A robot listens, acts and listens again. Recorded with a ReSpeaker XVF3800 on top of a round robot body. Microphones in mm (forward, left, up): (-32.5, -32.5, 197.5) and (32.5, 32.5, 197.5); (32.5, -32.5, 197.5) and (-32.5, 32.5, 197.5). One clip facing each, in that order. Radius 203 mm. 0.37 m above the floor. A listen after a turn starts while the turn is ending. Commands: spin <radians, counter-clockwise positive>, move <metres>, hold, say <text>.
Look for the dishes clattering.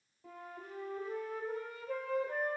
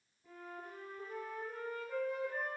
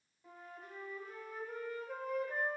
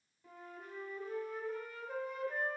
hold
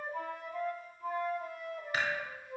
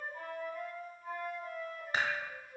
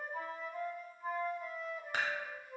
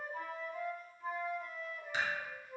spin -0.26
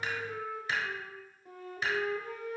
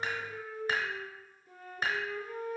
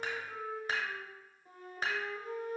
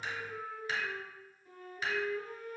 say Facing the dishes clattering.